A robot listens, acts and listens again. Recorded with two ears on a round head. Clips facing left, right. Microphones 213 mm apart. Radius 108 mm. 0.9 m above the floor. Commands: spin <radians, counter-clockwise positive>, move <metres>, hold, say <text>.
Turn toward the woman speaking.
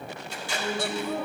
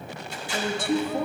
spin -0.70
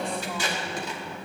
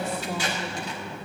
spin -0.17
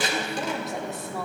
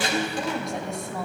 say Facing the woman speaking, 1 to 2 m away.